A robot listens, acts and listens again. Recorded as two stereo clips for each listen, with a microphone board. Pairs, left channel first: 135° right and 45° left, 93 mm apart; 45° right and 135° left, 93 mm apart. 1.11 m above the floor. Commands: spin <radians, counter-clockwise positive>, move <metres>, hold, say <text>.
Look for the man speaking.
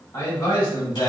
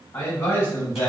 spin -1.75
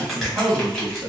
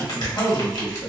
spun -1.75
say Found it: a man speaking, straight ahead, 1 to 2 m away.